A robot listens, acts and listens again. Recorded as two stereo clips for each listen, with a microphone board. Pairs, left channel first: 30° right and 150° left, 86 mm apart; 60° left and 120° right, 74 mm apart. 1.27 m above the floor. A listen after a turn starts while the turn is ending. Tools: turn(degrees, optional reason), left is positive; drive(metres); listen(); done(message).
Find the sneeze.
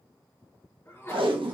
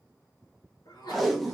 turn(degrees=35, reason="The sneeze: 35° left.")
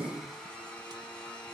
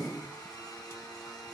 done("Facing where the sneeze came from. I can't hear it now.")